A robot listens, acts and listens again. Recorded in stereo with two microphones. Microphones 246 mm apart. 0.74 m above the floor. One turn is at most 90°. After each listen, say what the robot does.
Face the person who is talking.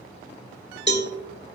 Keep listening.
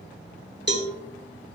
Keep listening.
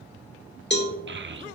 Turn 50° right.
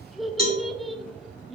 Found it: a child speaking, straight ahead.